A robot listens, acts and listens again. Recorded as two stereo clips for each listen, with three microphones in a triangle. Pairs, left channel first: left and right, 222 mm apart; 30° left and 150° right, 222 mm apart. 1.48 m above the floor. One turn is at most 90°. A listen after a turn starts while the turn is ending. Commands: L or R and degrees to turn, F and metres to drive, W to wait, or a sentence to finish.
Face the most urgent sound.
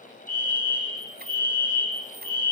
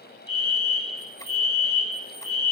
L40
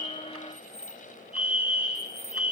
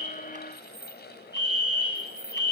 Found it: a fire alarm, straight ahead.